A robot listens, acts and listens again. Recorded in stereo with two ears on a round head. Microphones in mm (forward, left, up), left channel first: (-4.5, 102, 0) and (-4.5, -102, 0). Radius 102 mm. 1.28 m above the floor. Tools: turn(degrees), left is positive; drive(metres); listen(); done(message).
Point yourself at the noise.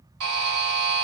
turn(degrees=-65)
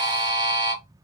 turn(degrees=-20)
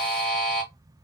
done("Facing the buzzer.")